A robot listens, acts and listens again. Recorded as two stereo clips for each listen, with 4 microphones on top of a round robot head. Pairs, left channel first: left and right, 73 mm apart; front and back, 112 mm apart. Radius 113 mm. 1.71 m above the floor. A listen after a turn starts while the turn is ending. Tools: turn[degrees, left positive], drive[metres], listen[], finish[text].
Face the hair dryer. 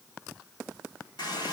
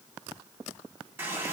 Action: listen[]
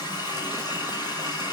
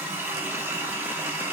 Action: listen[]
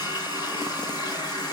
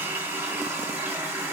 Action: finish[I can't make out a hair dryer, only a running tap.]